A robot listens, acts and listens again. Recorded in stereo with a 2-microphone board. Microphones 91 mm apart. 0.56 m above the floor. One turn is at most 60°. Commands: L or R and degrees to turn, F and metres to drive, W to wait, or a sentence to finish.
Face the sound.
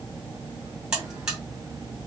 R30
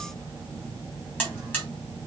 L25
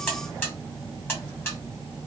L25
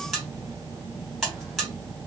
Facing the buzzer.